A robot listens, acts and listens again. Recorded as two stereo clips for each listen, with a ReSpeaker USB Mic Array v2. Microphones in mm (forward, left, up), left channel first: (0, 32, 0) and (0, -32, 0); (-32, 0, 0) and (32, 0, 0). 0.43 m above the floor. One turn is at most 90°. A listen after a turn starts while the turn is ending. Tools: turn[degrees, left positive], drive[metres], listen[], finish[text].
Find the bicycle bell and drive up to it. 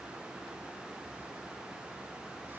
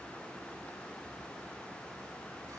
Action: listen[]
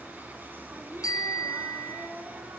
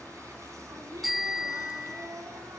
Thought: The bicycle bell: 90° left.
Action: turn[90]
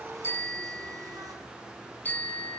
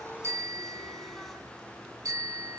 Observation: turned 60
Thought: The bicycle bell is now 30° left.
Action: turn[30]
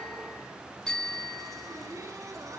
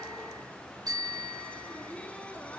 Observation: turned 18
Thought: The bicycle bell is now 10° left.
Action: turn[10]
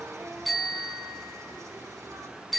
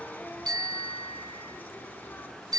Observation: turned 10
Action: drive[1.0]
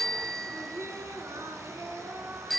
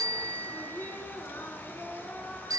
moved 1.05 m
Action: drive[1.0]
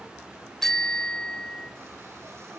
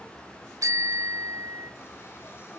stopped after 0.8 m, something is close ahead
Thought: The bicycle bell is now 10° left.
Action: turn[10]
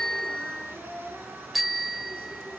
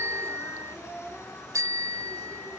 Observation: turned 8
Action: finish[I am next to the bicycle bell.]